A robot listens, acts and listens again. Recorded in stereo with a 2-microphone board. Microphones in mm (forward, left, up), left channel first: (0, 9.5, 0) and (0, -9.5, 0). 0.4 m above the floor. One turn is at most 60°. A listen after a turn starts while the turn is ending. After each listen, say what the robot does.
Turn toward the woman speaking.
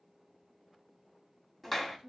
Turn 55° right.
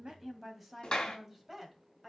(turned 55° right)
Turn 15° right.
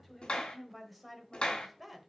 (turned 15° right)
Facing the woman speaking, 1 to 2 m away.